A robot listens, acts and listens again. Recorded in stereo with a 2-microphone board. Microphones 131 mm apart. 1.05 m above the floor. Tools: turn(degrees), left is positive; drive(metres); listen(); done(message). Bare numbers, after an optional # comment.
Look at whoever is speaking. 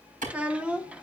turn(-30)
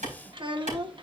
# So it is at 140° right.
turn(-140)
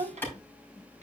# The child speaking is now 60° right.
turn(-60)
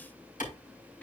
listen()
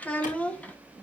# The child speaking is now 10° left.
turn(10)
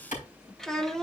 done("Found it: a child speaking, straight ahead.")